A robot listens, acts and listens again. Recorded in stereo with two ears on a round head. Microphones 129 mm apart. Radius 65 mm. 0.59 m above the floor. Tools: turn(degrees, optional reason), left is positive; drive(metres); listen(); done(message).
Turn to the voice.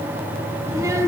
turn(degrees=-20, reason="The child speaking: about 20° right or 160° right.")
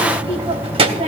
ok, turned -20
turn(degrees=-140, reason="So it is at 140° right.")
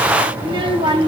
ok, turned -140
turn(degrees=-35, reason="The child speaking is now 35° right.")
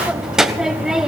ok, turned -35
done("Found it: a child speaking, straight ahead.")